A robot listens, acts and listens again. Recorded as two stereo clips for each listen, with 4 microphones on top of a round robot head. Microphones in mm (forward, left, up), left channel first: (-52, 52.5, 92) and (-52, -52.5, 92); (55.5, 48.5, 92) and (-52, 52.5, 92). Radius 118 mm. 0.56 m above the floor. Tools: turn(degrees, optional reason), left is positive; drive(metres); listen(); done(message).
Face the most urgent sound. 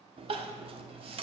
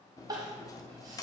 turn(degrees=-120, reason="The crying: 120° right.")
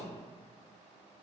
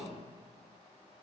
listen()
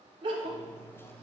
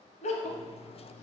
turn(degrees=-35, reason="The crying is now 35° right.")
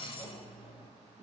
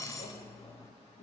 listen()
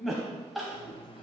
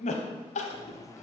done("Facing the crying.")